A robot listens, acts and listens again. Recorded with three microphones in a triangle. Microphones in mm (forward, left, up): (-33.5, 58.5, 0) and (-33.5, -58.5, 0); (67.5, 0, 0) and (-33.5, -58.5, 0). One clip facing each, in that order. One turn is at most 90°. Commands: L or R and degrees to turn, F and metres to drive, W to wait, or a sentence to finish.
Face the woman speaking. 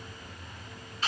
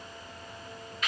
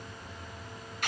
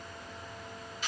W
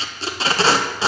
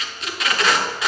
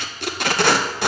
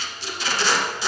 W
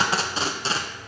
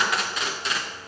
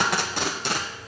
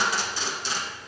I can't make out a woman speaking, only tape being pulled.